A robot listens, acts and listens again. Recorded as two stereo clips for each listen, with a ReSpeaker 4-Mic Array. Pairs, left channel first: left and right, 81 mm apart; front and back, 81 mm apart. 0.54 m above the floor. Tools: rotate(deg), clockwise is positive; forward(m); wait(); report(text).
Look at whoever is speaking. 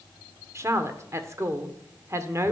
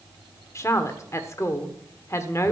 rotate(45)
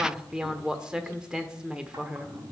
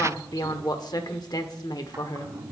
rotate(10)
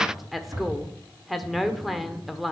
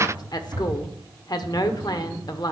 report("Found it: a woman speaking, straight ahead, 1 to 2 m away.")